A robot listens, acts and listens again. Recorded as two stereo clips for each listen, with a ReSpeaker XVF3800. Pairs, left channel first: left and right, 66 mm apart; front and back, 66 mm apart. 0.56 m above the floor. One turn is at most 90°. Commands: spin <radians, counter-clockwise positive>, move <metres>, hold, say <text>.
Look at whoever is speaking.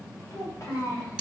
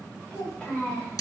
spin 1.22
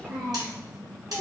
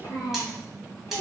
spin -0.52
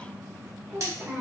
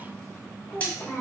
spin -0.61
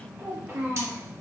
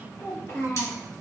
spin -0.61
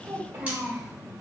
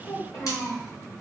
spin -0.52
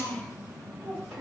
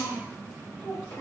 say Found it: a child speaking, straight ahead, 1 to 2 m away.